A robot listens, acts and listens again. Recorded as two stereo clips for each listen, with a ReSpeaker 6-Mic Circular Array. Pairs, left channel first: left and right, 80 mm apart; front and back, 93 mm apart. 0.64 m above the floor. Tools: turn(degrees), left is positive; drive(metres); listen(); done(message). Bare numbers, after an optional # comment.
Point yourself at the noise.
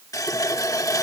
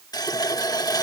# The running tap: 45° left.
turn(45)
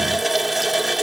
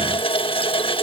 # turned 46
done("Found it: a running tap, straight ahead.")